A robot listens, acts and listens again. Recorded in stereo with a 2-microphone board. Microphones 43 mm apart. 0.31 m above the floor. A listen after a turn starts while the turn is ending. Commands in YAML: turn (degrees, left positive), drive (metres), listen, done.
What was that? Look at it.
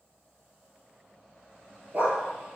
turn: -40
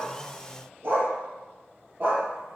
turn: -130
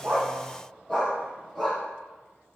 done: "Facing the dog barking."